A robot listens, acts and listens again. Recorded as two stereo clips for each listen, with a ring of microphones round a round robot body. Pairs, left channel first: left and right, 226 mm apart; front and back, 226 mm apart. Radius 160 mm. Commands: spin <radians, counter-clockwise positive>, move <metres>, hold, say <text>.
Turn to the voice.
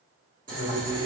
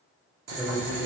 spin 1.75
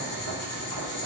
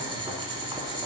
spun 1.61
spin 0.17
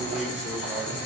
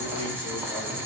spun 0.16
hold
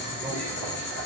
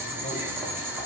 say I heard a man speaking from this way, but can't make it out now.